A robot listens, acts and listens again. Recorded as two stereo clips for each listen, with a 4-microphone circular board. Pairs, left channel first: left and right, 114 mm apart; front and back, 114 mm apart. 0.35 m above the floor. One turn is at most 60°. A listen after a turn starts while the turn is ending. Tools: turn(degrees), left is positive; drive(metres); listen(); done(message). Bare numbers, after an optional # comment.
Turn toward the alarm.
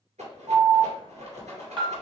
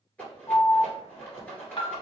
# The alarm: 50° right.
turn(-50)
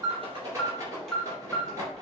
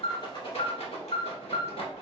done("Facing the alarm.")